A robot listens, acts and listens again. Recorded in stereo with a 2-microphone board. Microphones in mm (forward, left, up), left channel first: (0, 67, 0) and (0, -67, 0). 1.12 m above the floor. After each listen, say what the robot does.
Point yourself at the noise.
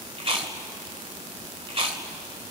Turn 45° right.
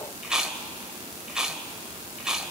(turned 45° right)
Found it: chewing, straight ahead.